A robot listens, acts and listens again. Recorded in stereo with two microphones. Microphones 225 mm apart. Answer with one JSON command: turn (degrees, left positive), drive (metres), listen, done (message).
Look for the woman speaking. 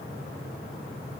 {"listen": true}
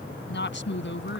{"turn": 60}
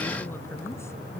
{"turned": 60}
{"turn": 10}
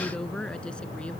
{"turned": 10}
{"done": "Facing the woman speaking."}